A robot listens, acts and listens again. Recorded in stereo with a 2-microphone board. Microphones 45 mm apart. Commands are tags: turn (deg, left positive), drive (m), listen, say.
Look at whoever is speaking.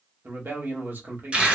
<turn deg="-45"/>
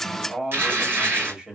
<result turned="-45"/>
<turn deg="-10"/>
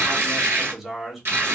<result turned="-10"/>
<say>Found it: a man speaking, straight ahead, 1 to 2 m away.</say>